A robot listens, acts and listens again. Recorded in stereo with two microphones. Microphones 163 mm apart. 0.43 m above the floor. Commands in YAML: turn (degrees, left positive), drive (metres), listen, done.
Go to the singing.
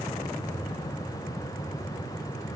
listen: true
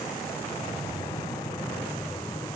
listen: true
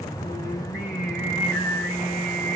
turn: 90
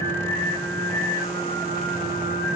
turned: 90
turn: -10
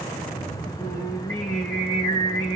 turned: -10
drive: 1.0
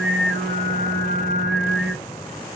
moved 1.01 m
drive: 1.0
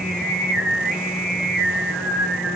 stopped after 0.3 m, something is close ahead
done: "Arrived at the singing, straight ahead."